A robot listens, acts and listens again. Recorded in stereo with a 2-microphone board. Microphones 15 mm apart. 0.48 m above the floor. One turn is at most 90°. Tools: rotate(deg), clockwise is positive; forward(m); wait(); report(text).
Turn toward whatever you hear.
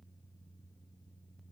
wait()
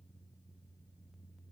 wait()
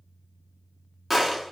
rotate(20)
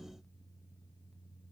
wait()
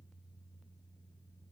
report("I heard a gunshot, but can't make it out now. It was about straight ahead or 140° right.")